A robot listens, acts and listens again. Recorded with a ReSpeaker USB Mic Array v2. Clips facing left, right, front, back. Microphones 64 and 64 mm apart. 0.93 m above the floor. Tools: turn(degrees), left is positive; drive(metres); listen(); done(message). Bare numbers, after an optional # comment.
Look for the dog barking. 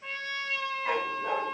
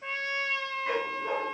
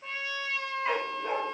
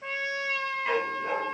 # The dog barking: 100° left.
turn(100)
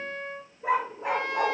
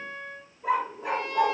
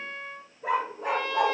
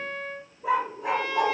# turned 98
# The dog barking is now 40° left.
turn(40)
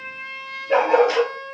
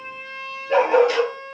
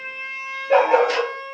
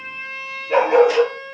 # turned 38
# The dog barking is now 25° left.
turn(25)
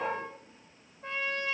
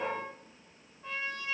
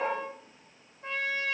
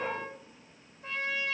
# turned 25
# The dog barking is now 10° left.
turn(10)
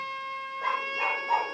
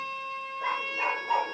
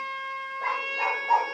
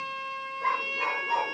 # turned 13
done("Found it: a dog barking, straight ahead, 2 to 4 m away.")